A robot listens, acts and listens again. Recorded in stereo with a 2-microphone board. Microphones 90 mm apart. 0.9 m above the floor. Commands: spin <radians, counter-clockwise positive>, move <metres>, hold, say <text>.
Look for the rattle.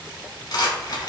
spin 0.87
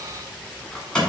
spin 0.17
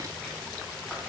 hold
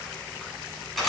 say Found it: a rattle, straight ahead.